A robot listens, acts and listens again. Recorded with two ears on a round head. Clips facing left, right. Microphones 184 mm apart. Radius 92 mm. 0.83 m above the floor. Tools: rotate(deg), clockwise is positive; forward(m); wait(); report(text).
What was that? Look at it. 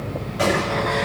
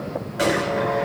rotate(15)
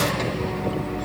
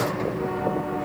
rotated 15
wait()
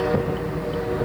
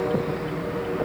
report("I heard a gunshot, but can't make it out now. It was about straight ahead or 150° right.")